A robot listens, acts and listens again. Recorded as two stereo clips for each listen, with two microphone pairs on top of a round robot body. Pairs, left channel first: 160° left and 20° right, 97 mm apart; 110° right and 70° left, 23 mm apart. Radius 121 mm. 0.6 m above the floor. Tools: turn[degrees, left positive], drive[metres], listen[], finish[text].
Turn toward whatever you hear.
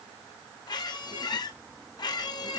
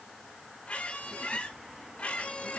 Thought: The squeak: 150° right.
Action: turn[-150]
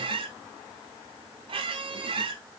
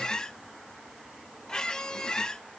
Thought: The squeak is now 50° right.
Action: turn[-50]
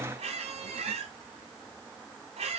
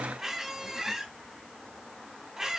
Action: finish[Facing the squeak, 1 to 2 m away.]